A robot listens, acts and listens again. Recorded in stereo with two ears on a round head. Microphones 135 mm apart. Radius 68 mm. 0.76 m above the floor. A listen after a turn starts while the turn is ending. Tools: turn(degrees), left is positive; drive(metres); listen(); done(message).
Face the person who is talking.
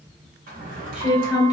turn(degrees=-30)
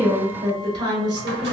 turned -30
turn(degrees=-145)
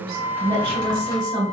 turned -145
turn(degrees=-35)
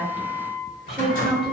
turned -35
done("Found it: a woman speaking, straight ahead.")